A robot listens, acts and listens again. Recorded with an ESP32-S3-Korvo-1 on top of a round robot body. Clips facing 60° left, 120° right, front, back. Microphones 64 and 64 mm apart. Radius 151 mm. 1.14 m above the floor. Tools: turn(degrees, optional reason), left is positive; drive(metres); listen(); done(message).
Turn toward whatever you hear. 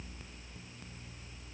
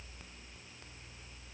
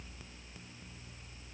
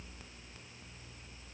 listen()
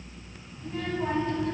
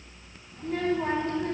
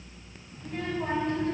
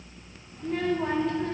turn(degrees=-165, reason="The child speaking: 165° right.")
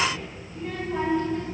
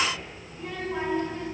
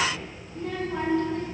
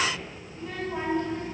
turn(degrees=-40, reason="The child speaking is now 40° right.")
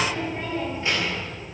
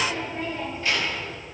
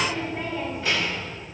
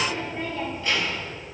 turn(degrees=-10, reason="The child speaking is now 10° right.")
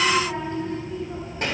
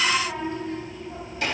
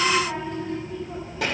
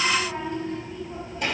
done("Found it: a child speaking, straight ahead.")